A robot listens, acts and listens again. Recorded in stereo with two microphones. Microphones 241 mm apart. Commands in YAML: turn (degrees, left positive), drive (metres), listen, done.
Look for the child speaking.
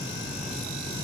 listen: true
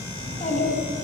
turn: 30
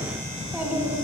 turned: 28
turn: -10
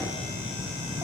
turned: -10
listen: true
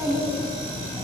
turn: -15
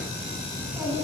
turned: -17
turn: -10
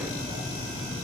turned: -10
listen: true
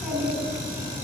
done: "Facing the child speaking, 2 to 4 m away."